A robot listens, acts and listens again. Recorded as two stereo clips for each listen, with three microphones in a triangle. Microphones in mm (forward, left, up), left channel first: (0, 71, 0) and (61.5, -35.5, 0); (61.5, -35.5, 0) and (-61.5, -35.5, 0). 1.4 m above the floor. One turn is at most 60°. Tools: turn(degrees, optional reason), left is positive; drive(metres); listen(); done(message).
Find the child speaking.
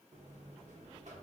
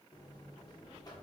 listen()
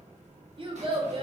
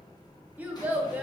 turn(degrees=-60, reason="The child speaking: 105° right.")
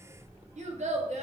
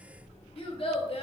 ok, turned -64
turn(degrees=-40, reason="The child speaking is now 40° right.")
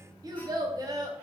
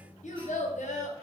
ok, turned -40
done("Facing the child speaking.")